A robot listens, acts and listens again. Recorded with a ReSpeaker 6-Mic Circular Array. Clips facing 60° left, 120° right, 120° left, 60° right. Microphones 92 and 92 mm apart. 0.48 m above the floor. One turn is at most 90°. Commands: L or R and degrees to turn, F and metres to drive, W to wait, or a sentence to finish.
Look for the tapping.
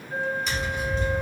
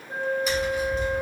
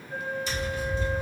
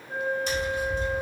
R35
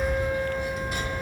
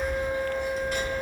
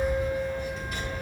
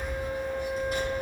R15
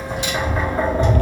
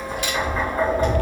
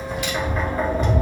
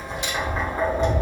Facing the tapping.